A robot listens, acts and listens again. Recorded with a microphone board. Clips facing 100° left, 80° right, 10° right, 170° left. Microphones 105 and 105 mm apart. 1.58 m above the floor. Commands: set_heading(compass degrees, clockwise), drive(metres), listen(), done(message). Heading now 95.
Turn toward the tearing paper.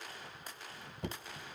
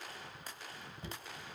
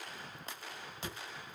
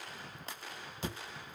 listen()
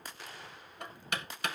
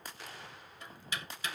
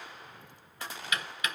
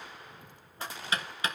listen()
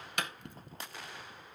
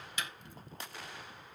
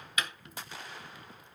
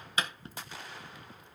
done("I can't make out tearing paper, only knocking.")